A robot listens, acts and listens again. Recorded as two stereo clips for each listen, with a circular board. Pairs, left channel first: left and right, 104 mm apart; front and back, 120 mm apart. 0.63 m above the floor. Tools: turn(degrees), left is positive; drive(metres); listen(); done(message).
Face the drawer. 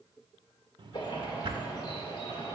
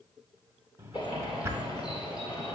turn(degrees=-115)
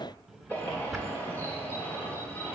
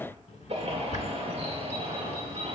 done("Found it: a drawer, straight ahead.")